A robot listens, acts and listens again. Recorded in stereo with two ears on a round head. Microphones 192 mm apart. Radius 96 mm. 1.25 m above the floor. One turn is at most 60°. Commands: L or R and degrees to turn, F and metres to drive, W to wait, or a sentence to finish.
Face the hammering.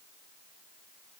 W
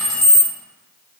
W
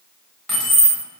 I can't make out hammering to turn to.